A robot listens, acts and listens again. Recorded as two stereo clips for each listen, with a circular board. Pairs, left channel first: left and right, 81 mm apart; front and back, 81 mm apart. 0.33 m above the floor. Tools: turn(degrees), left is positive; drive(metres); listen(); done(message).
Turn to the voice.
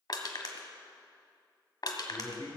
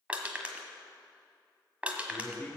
turn(degrees=65)
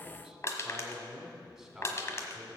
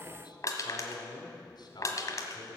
done("Facing the man speaking.")